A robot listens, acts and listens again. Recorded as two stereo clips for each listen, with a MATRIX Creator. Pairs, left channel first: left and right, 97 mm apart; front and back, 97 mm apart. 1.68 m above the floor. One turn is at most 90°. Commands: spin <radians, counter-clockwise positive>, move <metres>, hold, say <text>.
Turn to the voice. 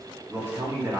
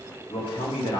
spin -0.44
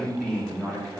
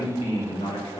say Facing the man speaking, 2 to 4 m away.